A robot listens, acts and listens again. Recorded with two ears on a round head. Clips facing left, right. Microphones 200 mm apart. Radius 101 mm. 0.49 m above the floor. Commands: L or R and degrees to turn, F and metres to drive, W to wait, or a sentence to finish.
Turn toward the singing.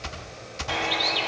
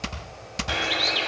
W
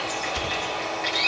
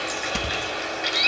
W
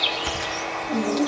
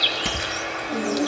L30
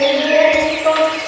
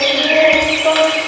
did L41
L140
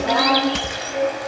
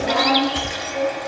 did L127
L15
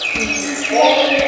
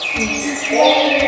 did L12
Found it: singing, straight ahead, over 4 m away.